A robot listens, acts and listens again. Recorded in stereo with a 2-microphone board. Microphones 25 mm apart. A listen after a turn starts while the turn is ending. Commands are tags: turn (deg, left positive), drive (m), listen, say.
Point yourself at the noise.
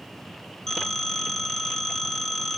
<turn deg="25"/>
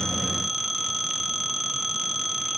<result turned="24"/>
<say>Facing the phone ringing.</say>